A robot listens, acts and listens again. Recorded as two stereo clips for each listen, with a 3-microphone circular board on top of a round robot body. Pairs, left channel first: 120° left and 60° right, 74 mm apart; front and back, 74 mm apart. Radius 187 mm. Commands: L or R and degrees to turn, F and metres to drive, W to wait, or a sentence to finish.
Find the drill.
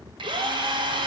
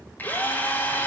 R65
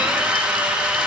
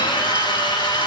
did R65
L15
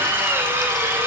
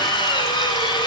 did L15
Facing the drill.